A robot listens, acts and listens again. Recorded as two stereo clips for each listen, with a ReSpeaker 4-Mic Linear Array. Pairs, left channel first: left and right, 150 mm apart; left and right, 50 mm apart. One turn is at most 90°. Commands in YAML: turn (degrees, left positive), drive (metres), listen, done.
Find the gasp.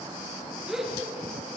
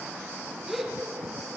turn: -30
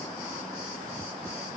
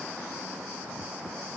listen: true
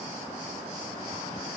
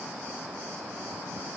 done: "I heard a gasp, but can't make it out now. It was about 25° left or 145° right."